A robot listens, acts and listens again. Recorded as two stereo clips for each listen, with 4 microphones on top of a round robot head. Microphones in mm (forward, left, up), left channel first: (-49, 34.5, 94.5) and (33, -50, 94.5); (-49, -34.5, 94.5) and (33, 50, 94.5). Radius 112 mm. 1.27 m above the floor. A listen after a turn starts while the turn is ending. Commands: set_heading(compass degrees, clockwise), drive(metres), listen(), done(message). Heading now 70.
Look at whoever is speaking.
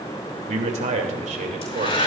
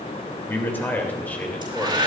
set_heading(125)
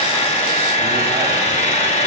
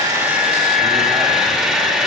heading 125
listen()
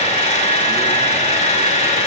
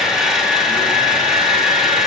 listen()
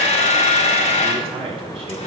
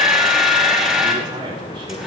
done("Found it: a man speaking, straight ahead.")